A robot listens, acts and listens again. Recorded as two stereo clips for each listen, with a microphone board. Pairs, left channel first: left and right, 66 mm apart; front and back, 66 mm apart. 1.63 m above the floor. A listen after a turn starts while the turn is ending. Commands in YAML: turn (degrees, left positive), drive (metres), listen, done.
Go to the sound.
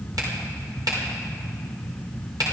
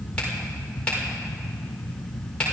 turn: -70
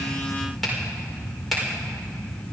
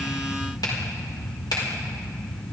drive: 1.0
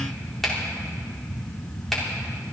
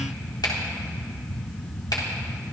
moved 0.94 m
drive: 1.0
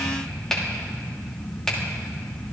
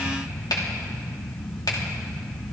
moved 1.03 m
turn: 10
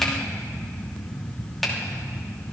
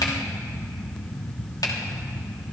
drive: 1.0
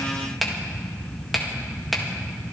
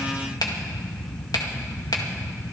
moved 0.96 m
drive: 1.0
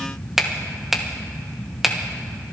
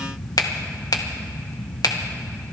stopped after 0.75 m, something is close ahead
done: "Arrived at the finger snap, straight ahead."